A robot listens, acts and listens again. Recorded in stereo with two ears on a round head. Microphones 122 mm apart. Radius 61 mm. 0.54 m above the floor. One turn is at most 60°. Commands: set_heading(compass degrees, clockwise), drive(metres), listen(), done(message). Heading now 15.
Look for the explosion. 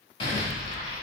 set_heading(340)
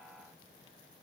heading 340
listen()
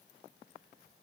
done("I heard an explosion, but can't make it out now. It was about straight ahead or 110° left.")